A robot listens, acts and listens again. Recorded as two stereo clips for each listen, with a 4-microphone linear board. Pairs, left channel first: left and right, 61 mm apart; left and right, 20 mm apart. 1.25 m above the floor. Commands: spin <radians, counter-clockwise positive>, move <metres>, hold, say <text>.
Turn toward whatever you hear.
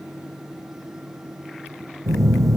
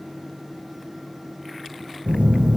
spin -1.13
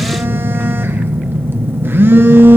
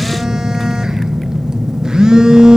spin -0.70
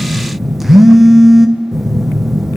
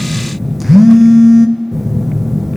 say Facing the phone buzzing, under 1 m away.